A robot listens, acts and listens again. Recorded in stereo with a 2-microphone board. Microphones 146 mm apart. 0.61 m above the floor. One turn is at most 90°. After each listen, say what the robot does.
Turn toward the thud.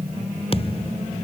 Turn 40° left.
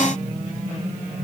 Keep listening.
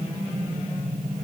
I heard a thud, but can't make it out now. It was about straight ahead or 100° left.